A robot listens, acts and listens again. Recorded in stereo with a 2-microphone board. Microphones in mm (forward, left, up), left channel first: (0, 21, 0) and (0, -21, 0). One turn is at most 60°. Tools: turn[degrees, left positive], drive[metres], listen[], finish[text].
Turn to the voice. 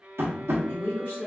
Thought: The woman speaking: about 65° left or 115° left.
Action: turn[60]
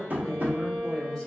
Thought: So it is at 15° left.
Action: turn[15]
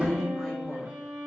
Action: finish[Facing the woman speaking.]